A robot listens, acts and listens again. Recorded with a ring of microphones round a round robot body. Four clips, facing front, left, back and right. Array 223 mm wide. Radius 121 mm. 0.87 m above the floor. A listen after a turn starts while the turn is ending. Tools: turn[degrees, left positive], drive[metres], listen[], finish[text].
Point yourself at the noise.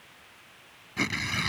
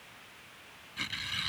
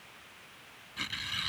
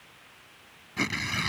Thought: The tearing paper: 45° right.
Action: turn[-45]
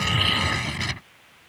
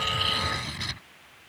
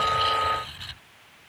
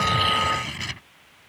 Thought: The tearing paper is now 10° right.
Action: turn[-10]
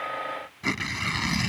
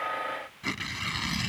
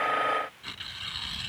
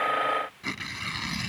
Action: finish[Facing the tearing paper.]